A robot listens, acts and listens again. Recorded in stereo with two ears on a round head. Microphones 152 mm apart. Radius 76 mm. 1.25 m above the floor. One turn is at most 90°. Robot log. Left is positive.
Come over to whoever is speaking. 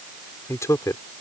note: The man speaking: about 20° left or 160° left.
cmd yaw +20
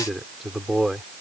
cmd fwd 1.0
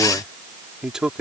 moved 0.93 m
cmd fwd 1.0
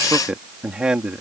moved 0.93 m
cmd fwd 1.0
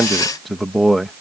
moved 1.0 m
cmd fwd 1.0
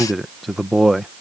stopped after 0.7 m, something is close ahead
end: Arrived at the man speaking, straight ahead.